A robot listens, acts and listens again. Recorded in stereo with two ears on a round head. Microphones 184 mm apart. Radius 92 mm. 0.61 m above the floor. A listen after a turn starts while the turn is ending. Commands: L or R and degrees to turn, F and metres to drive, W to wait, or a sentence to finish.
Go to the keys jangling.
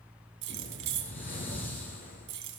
R60
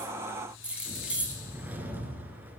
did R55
F1.0
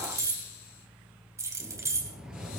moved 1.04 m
R15
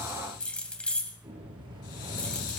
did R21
F1.0
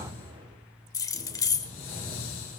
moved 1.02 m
L15
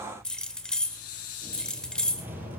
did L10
F1.0
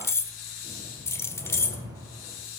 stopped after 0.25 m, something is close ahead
L15
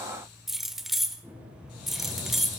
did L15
I am next to the keys jangling.